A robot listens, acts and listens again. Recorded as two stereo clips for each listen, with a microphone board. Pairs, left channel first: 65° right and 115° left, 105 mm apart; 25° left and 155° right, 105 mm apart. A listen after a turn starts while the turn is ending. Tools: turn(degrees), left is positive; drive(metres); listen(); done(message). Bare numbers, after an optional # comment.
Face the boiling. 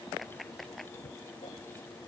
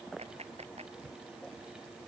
listen()
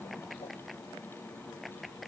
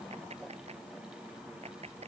listen()
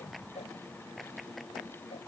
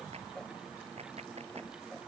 done("I can't make out boiling to turn to.")